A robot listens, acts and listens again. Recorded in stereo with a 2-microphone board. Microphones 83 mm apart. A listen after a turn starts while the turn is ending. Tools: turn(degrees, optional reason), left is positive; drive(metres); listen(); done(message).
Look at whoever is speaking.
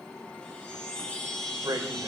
turn(degrees=-50, reason="The man speaking: about 50° right or 130° right.")
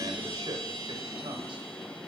turn(degrees=-80, reason="So it is at 80° right.")
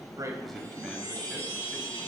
listen()
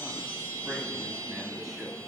listen()
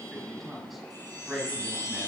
done("Found it: a man speaking, straight ahead, over 4 m away.")